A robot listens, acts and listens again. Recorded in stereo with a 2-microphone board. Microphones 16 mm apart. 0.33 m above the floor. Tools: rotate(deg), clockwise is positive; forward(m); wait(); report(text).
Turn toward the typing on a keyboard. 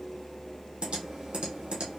rotate(90)
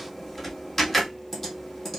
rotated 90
report("Found it: typing on a keyboard, straight ahead, 2 to 4 m away.")